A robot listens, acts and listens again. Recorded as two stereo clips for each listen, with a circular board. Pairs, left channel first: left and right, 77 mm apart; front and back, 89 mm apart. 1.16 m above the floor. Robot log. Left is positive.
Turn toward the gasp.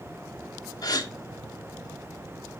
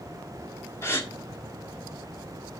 note: The gasp: 60° left.
cmd yaw +60
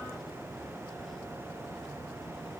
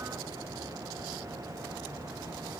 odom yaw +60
end: Facing where the gasp came from. I can't hear it now.